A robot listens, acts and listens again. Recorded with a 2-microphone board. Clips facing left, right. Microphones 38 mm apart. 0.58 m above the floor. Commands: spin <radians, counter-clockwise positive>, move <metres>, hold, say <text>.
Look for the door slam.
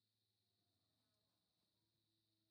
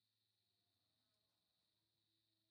hold
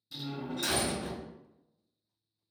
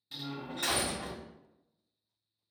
spin -0.79
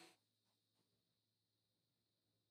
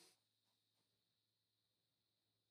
hold
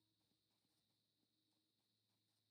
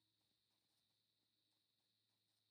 say I heard a door slam, but can't make it out now. It was about straight ahead or 90° right.